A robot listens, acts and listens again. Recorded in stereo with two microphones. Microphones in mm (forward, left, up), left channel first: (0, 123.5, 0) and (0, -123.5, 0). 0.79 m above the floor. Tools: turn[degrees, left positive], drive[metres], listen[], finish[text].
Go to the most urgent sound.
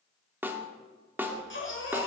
Thought: The baby crying: about 55° left or 125° left.
Action: turn[55]
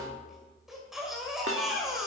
Action: drive[1.0]
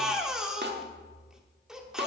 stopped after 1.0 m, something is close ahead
Action: finish[Arrived at the baby crying, straight ahead.]